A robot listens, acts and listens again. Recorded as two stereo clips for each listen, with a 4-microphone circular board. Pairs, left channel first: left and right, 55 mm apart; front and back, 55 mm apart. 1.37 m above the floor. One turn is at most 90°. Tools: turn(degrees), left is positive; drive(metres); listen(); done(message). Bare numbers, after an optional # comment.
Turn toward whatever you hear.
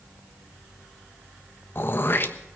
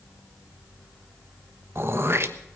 # The throat clearing: 135° left.
turn(90)
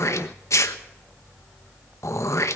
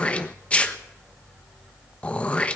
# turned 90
# The throat clearing is now 65° left.
turn(65)
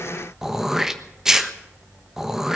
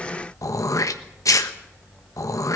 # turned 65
# The throat clearing is now 10° right.
turn(-10)
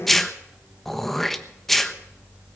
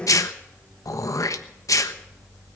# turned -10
done("Found it: throat clearing, straight ahead, 1 to 2 m away.")